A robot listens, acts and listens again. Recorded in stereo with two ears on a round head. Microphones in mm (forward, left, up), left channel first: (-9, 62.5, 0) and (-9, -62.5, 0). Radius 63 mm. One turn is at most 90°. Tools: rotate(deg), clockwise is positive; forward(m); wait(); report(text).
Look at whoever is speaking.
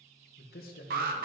rotate(-70)
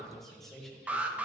report("Found it: a man speaking, straight ahead.")